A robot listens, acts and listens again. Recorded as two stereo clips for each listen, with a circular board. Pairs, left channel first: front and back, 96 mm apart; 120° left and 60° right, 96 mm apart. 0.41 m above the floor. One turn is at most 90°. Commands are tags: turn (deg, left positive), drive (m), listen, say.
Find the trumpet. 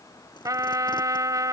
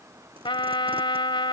<turn deg="90"/>
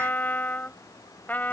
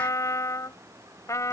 <turn deg="65"/>
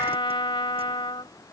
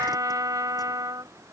<turn deg="-15"/>
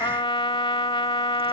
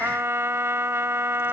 <say>Found it: a trumpet, straight ahead.</say>